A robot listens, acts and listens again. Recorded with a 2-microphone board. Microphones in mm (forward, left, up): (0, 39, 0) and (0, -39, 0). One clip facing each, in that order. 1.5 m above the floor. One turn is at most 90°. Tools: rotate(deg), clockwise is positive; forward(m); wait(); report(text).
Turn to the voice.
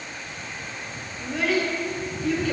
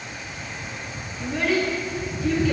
rotate(30)
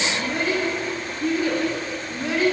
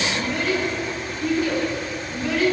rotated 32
rotate(-25)
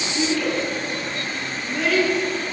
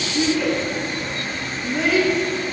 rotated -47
rotate(20)
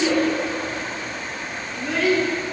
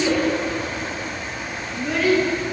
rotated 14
report("Facing the child speaking, 1 to 2 m away.")